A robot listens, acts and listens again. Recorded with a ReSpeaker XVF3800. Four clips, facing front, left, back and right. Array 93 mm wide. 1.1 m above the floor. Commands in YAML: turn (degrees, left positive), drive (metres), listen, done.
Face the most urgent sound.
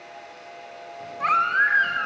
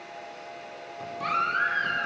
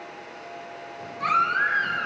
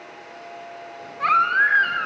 turn: -65
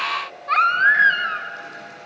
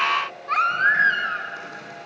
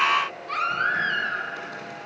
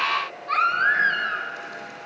turn: 15
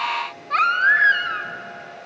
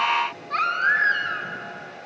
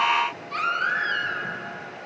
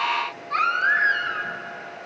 done: "Facing the baby crying, 1 to 2 m away."